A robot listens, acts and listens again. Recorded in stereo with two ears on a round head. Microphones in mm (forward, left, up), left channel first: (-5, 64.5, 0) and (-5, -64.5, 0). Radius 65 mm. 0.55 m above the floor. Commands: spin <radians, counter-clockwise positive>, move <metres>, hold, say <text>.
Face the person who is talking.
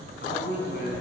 spin 1.31
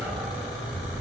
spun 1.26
hold
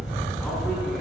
hold
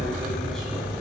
say I heard a man speaking, but can't make it out now. It was about straight ahead or 35° left.